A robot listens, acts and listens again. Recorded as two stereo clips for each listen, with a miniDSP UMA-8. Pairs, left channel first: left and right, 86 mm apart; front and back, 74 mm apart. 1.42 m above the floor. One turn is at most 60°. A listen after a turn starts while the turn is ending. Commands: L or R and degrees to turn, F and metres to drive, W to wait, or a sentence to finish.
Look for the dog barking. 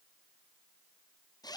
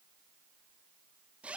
W
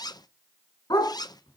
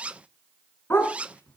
L55
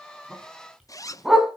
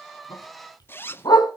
Found it: a dog barking, straight ahead.